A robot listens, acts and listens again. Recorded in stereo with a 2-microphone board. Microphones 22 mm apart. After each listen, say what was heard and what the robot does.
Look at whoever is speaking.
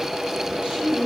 The woman speaking: about 60° right or 120° right. Turn 60° right.
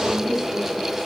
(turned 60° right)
Keep listening.
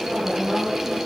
Facing the woman speaking.